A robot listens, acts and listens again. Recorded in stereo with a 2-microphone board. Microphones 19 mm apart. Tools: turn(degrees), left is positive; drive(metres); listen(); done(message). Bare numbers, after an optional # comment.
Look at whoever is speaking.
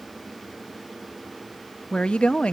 # The woman speaking: about 75° left or 105° left.
turn(75)
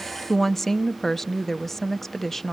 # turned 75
# So it is at 15° left.
turn(15)
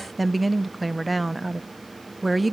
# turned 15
done("Found it: a woman speaking, straight ahead.")